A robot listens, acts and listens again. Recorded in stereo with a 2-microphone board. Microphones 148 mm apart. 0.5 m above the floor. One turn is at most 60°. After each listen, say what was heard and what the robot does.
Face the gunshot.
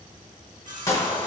The gunshot: about 20° left or 160° left. Turn 20° left.
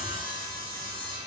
Keep listening.
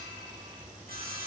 I heard a gunshot, but can't make it out now. It was about straight ahead or 140° left.